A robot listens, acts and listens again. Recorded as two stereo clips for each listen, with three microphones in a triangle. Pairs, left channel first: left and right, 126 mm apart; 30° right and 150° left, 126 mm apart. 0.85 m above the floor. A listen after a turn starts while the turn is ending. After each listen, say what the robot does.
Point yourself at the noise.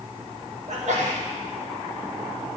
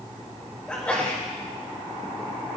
Turn 110° right.
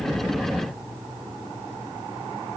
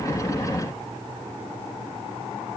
I heard a sneeze from this way, but can't make it out now.